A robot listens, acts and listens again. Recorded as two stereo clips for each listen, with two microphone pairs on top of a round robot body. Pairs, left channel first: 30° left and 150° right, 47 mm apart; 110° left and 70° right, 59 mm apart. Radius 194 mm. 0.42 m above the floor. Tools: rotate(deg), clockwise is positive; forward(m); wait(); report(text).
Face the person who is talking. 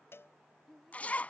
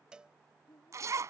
rotate(-120)
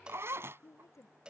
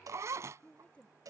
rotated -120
rotate(-40)
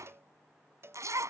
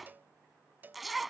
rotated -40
wait()
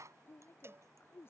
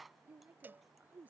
report("Found it: a woman speaking, straight ahead.")